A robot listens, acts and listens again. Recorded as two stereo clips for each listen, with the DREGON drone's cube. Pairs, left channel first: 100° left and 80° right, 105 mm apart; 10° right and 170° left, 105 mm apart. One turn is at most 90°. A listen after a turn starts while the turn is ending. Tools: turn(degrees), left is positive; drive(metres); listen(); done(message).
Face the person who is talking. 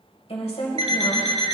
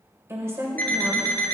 turn(degrees=90)
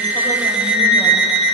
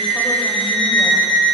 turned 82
turn(degrees=25)
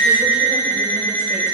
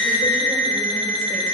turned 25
listen()
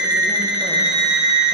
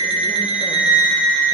done("Facing where the woman speaking came from. I can't hear it now.")